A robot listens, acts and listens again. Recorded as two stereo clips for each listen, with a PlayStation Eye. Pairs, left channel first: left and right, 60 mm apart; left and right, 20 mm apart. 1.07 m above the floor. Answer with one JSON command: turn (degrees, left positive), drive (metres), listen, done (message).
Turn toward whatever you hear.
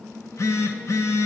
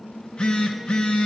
{"turn": 60}
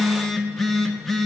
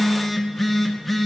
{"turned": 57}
{"done": "Found it: a phone buzzing, straight ahead, 1 to 2 m away."}